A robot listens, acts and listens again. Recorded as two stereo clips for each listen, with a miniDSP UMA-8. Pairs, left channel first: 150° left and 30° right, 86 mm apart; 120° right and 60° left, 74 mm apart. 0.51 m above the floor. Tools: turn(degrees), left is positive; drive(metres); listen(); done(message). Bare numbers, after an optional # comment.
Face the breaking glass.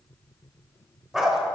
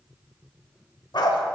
listen()
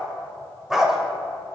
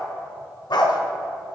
listen()
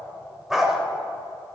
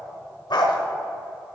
done("I can't make out breaking glass to turn to.")